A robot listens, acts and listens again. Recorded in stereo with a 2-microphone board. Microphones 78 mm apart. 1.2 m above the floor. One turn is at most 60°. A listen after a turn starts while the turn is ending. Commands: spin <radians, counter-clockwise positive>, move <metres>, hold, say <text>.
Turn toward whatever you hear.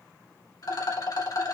spin 1.05
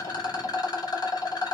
spin 1.05
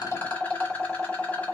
spin 0.35
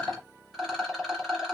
say Found it: a rattle, straight ahead.